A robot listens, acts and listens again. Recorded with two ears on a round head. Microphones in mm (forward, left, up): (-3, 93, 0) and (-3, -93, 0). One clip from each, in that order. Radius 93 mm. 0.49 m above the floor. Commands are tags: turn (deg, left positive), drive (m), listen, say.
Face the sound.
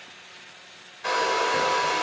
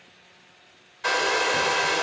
<turn deg="-20"/>
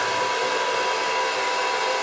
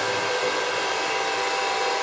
<say>Found it: a hair dryer, straight ahead, under 1 m away.</say>